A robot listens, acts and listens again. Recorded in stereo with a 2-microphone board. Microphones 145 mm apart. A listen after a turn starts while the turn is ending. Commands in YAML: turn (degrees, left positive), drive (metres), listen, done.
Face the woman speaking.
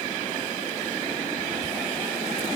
listen: true
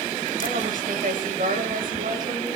turn: -70
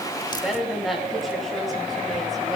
done: "Found it: a woman speaking, straight ahead, over 4 m away."